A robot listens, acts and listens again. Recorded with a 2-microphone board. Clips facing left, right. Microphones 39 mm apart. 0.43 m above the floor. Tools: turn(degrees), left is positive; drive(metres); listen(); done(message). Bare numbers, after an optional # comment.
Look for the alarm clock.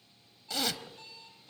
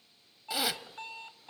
# The alarm clock: about 50° right or 130° right.
turn(-50)
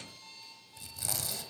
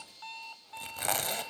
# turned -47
# So it is at 75° right.
turn(-75)
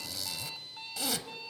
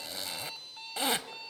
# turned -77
done("Found it: an alarm clock, straight ahead, 1 to 2 m away.")